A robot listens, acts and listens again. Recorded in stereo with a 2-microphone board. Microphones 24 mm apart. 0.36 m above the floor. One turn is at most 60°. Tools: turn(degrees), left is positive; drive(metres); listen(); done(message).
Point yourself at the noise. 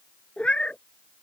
turn(degrees=50)
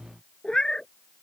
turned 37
turn(degrees=30)
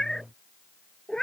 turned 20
turn(degrees=30)
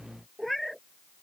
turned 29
done("Facing the cat meowing.")